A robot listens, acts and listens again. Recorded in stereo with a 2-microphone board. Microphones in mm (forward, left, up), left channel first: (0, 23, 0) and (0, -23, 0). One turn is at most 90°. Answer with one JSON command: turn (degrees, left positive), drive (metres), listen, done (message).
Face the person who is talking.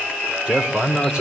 {"turn": -20}
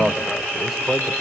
{"done": "Found it: a man speaking, straight ahead."}